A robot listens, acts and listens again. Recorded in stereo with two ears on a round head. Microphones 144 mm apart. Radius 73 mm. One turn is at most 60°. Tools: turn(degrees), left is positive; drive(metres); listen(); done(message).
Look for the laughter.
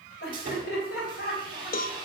turn(degrees=60)
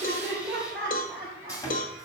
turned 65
turn(degrees=-10)
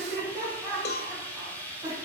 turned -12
turn(degrees=-15)
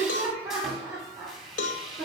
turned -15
done("Facing the laughter, 2 to 4 m away.")